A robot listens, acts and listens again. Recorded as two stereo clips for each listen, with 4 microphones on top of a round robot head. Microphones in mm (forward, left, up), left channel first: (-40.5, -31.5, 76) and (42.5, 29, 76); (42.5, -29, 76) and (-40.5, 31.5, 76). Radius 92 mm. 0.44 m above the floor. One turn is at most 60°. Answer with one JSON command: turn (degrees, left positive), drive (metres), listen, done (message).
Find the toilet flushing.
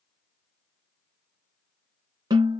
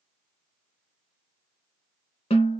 {"listen": true}
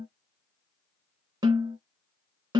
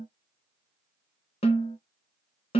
{"listen": true}
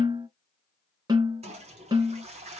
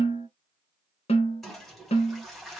{"turn": 50}
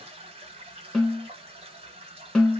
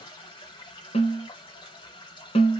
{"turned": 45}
{"done": "Facing the toilet flushing, 1 to 2 m away."}